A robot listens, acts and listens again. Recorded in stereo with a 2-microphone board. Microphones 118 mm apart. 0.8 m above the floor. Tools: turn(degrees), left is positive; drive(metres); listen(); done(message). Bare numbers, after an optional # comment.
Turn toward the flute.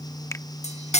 listen()
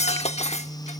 listen()
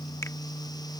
done("I can't make out a flute, only cutlery clinking.")